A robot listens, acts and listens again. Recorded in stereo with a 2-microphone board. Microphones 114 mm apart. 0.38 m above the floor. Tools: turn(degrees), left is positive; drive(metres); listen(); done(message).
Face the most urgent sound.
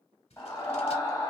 turn(degrees=30)
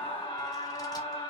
turn(degrees=115)
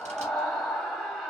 done("Facing the scream.")